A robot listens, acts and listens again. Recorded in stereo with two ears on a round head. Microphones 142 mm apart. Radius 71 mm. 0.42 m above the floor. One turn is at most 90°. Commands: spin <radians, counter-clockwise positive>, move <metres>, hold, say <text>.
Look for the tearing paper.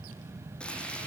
hold
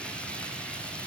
hold
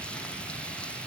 say I can't make out tearing paper, only frying.